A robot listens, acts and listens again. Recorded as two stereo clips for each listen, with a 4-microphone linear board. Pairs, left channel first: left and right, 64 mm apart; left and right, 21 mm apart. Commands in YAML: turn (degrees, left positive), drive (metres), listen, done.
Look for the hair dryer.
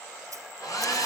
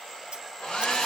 turn: 65
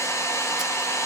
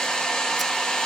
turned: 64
turn: 50
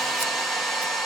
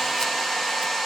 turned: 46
done: "Facing the hair dryer, 2 to 4 m away."